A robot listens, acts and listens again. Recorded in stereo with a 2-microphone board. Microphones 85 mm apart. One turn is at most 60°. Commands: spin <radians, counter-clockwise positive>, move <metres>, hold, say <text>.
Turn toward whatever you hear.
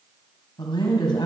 spin 1.05
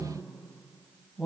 say Facing the woman speaking, 2 to 4 m away.